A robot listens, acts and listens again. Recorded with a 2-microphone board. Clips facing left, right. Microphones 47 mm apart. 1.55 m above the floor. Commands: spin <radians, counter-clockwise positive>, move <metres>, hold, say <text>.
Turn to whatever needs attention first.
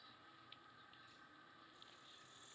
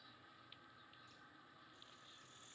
hold
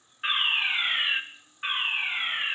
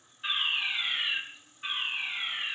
spin 0.79
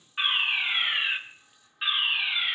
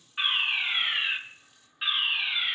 say Found it: a fire alarm, straight ahead, 1 to 2 m away.